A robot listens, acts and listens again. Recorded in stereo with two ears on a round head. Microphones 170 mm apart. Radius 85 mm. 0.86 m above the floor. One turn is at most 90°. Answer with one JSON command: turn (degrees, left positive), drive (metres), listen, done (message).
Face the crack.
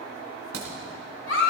{"turn": -90}
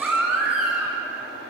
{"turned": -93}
{"done": "Facing where the crack came from. I can't hear it now."}